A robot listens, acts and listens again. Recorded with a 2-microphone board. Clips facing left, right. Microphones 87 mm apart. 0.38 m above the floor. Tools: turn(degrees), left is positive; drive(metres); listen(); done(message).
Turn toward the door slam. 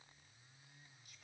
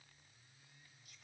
listen()
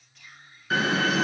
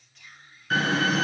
turn(degrees=30)
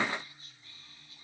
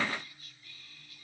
listen()
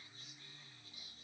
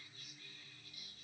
done("I heard a door slam, but can't make it out now. It was about 25° right or 145° left.")